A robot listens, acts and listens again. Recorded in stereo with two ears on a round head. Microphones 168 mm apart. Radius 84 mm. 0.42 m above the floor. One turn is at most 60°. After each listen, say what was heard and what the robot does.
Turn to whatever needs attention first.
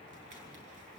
Keep listening.
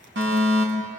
The fire alarm: about 65° right or 115° right. Turn 60° right.
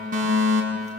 So it is at 50° right. Turn 50° right.
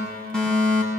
Facing the fire alarm.